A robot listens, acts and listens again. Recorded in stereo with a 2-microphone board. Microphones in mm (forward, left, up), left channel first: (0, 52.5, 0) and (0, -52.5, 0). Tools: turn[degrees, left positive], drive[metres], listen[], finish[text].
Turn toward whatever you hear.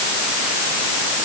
Action: listen[]
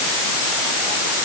Action: listen[]
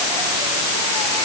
Action: finish[I can't make out anything to turn to.]